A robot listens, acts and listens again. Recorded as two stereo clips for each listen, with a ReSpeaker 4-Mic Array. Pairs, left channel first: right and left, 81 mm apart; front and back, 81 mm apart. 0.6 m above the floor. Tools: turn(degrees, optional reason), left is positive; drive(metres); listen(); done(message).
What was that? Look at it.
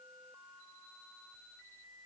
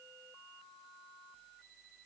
listen()
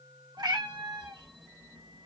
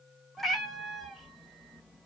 turn(degrees=90, reason="The cat meowing: 90° left.")
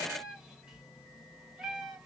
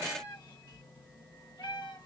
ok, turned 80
turn(degrees=10, reason="The cat meowing is now 10° left.")
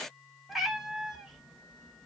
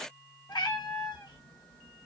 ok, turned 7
done("Facing the cat meowing.")